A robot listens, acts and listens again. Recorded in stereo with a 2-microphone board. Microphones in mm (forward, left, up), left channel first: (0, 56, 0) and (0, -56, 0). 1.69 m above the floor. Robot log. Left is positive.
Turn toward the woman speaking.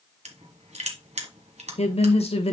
note: The woman speaking: about 60° left or 120° left.
cmd yaw +60
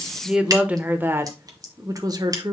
note: So it is at 40° right.
cmd yaw -40
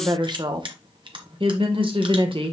note: The woman speaking is now 50° right.
cmd yaw -50
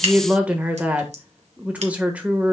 note: The woman speaking is now 10° right.
cmd yaw -10
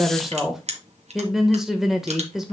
end: Found it: a woman speaking, straight ahead, 1 to 2 m away.